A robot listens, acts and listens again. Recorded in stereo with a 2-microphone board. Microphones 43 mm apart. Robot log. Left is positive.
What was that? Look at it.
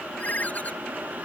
note: The ringtone: about 35° left or 145° left.
cmd yaw +35
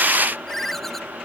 end: Found it: a ringtone, straight ahead.